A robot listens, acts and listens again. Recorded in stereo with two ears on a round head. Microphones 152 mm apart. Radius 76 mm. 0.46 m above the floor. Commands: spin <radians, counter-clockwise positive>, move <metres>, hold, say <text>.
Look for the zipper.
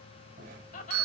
hold
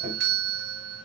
hold
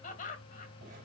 say I can't make out a zipper to turn to.